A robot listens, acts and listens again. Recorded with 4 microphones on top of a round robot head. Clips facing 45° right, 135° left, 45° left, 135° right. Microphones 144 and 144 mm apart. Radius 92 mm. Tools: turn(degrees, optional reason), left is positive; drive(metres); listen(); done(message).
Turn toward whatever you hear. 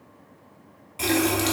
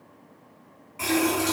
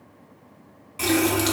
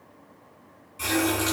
turn(degrees=15, reason="The running tap: 15° left.")
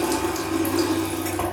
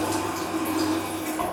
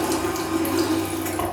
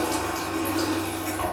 done("Facing the running tap, 1 to 2 m away.")